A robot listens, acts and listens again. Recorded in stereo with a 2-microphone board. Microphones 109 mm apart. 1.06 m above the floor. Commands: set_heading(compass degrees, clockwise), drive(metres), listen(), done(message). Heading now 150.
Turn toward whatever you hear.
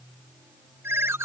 set_heading(175)
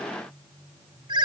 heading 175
set_heading(300)
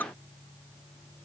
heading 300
set_heading(280)
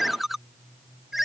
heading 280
done("Facing the ringtone.")